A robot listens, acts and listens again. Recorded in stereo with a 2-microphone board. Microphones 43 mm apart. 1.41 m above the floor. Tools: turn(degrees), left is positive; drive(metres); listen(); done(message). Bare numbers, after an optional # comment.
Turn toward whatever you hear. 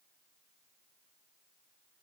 listen()
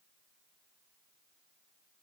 listen()
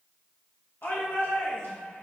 # The shout: about 60° left or 120° left.
turn(60)
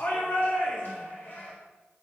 # So it is at 55° left.
turn(55)
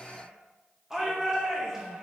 # The shout is now 10° right.
turn(-10)
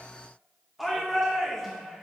done("Found it: a shout, straight ahead, 2 to 4 m away.")